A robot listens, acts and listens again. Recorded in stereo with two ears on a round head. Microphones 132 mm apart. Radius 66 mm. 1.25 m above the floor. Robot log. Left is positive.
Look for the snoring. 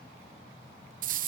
cmd idle
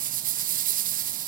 cmd idle
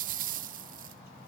end: I can't make out snoring, only a rattle.